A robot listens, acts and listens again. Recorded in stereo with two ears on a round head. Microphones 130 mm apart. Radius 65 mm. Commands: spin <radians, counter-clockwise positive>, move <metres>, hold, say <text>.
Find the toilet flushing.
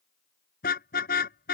hold
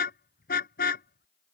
hold
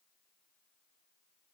say I can't make out a toilet flushing to turn to.